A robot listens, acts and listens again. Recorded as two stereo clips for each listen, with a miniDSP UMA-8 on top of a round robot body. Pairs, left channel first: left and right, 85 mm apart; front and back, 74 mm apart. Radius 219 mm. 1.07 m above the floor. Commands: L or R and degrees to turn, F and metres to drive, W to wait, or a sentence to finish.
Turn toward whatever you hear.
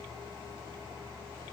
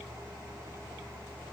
W
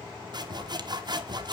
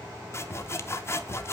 R55
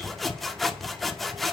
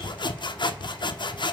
Found it: sawing, straight ahead.